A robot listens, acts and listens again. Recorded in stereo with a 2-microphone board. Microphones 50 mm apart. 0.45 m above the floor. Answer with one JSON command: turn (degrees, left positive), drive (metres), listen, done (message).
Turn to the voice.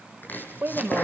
{"turn": -45}
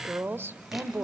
{"turn": -75}
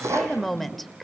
{"done": "Found it: a woman speaking, straight ahead."}